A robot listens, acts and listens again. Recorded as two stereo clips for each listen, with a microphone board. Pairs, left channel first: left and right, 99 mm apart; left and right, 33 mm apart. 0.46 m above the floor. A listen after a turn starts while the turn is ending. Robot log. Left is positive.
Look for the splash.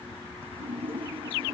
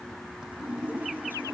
note: The splash: about 65° right or 115° right.
cmd yaw -65
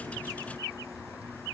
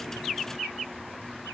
cmd idle
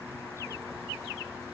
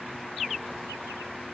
end: I heard a splash, but can't make it out now. It was about straight ahead or 50° right.